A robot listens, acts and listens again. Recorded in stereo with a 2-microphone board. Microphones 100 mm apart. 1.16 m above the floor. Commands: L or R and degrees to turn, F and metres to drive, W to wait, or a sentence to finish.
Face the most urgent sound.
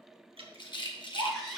L30
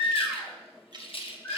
L150
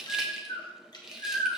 L50
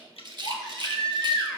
Facing the baby crying.